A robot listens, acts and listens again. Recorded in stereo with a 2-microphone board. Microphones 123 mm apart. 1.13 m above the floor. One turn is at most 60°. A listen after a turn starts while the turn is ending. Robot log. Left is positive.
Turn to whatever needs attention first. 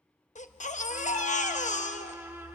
cmd yaw +60
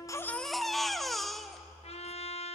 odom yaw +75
end: Facing the baby crying.